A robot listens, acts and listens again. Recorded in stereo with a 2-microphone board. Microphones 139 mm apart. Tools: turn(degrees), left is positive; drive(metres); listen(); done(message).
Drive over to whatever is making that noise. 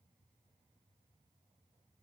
listen()
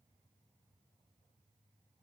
listen()
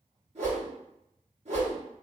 turn(degrees=-50)
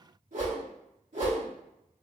turn(degrees=-80)
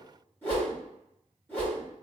turn(degrees=15)
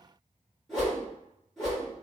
drive(metres=1.0)
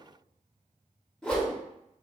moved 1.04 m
turn(degrees=10)
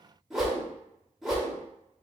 drive(metres=1.0)
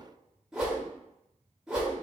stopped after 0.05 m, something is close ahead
done("Arrived at the whoosh, straight ahead.")